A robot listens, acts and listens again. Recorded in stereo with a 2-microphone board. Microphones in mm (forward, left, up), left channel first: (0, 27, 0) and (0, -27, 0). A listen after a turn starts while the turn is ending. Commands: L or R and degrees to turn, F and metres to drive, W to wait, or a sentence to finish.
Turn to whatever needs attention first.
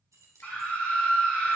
L30
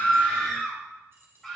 Facing the scream.